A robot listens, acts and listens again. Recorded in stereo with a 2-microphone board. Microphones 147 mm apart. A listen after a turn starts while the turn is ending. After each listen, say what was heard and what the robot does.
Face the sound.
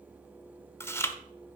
The chewing: about 15° left or 165° left. Turn 15° left.
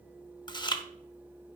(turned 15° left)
So it is at 150° left. Turn 150° left.
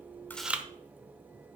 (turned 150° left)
The chewing is now 10° right. Turn 10° right.
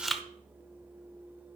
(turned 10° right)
Found it: chewing, straight ahead.